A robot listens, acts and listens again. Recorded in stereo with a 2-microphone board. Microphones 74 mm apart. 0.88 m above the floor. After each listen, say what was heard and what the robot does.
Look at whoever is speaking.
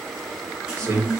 The man speaking: about 40° right or 140° right. Turn 40° right.
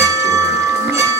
Keep listening.
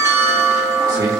Keep listening.
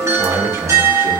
So it is at 100° right. Turn 100° right.
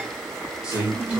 The man speaking is now 15° right. Turn 15° right.
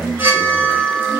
Keep listening.
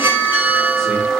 Keep listening.
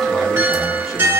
Facing where the man speaking came from. I can't hear it now.